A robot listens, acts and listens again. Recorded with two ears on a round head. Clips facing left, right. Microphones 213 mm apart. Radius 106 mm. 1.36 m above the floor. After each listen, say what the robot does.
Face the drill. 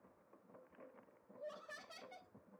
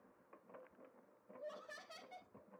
Keep listening.
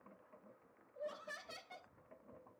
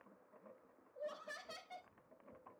Keep listening.
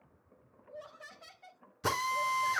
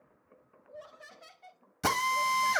Turn 90° right.
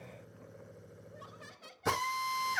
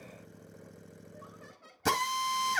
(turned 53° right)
Turn 45° right.
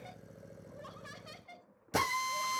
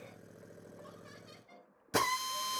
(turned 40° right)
Facing the drill, 2 to 4 m away.